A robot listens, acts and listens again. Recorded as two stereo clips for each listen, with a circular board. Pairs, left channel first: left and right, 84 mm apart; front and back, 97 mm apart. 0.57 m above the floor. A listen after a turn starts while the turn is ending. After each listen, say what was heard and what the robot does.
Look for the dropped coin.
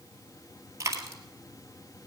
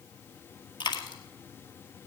The dropped coin: 40° right. Turn 40° right.
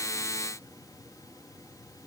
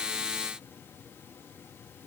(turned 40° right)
I heard a dropped coin from this way, but can't make it out now.